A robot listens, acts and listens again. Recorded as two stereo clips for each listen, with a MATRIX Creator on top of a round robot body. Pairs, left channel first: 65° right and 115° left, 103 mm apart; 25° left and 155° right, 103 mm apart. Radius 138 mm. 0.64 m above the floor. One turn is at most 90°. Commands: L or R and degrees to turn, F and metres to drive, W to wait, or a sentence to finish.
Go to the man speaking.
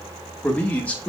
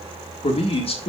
L10
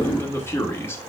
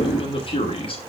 F1.0
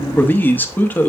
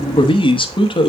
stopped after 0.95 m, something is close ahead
I am next to the man speaking.